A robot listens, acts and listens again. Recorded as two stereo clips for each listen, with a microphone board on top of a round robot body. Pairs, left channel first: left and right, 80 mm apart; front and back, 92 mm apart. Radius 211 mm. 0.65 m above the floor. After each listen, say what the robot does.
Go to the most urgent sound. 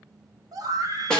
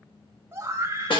Turn 120° right.
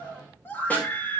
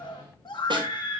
Turn 30° left.
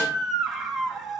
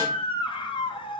Drive 1.0 m forward.
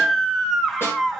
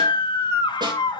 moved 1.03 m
Drive 1.0 m forward.
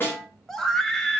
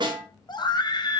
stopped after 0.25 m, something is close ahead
Turn 10° left.
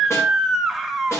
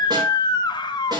I am next to the scream.